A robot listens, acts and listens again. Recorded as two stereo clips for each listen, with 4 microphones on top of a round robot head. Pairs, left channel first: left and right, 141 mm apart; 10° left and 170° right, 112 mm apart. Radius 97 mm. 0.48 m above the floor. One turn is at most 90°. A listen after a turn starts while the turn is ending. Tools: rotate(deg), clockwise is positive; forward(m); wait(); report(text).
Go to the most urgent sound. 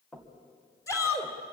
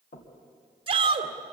rotate(-90)
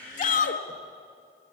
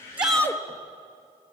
rotate(-75)
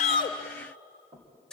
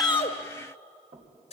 forward(1.0)
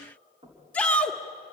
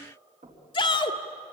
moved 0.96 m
rotate(-10)
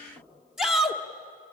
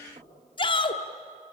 forward(1.0)
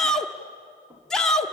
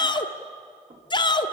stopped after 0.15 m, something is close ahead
report("Arrived at the shout, straight ahead.")